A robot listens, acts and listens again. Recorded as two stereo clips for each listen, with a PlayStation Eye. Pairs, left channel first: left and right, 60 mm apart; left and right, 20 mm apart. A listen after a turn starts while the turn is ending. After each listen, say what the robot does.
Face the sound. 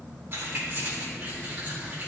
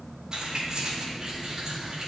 Turn 25° right.
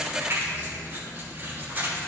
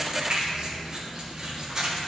Turn 35° right.
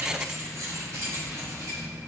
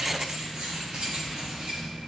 Turn 125° right.
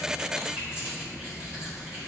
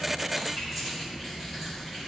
Turn 15° right.
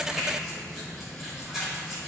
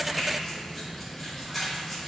Found it: keys jangling, straight ahead.